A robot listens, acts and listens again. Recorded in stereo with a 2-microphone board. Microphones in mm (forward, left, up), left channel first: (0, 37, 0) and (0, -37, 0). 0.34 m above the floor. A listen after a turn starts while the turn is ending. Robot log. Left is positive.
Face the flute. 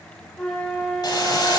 cmd yaw +30
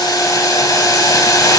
cmd idle
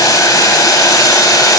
cmd idle
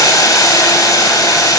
end: I heard a flute, but can't make it out now. It was about 20° right or 140° left.